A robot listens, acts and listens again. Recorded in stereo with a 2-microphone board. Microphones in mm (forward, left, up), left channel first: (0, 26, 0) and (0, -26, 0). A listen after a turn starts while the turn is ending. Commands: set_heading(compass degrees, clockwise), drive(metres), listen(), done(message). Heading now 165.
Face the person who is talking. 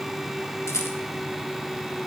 listen()
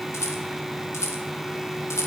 listen()
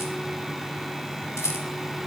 done("I can't make out anyone speaking to turn to.")